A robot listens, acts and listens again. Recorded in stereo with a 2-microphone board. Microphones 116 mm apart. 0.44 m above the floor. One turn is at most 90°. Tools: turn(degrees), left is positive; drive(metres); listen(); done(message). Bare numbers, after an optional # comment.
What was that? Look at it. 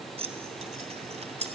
# The keys jangling: about 70° right or 110° right.
turn(-70)
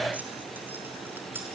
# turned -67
listen()
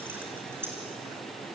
# So it is at 20° right.
turn(-20)
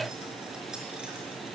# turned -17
listen()
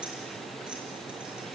listen()
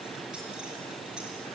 done("I heard keys jangling from this way, but can't make it out now.")